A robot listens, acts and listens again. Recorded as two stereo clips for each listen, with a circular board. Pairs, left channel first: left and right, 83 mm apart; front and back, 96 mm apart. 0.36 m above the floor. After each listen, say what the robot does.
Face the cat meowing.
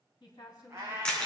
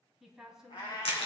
Turn 30° right.
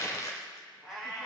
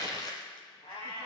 Turn 10° left.
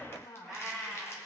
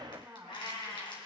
Found it: a cat meowing, straight ahead, over 4 m away.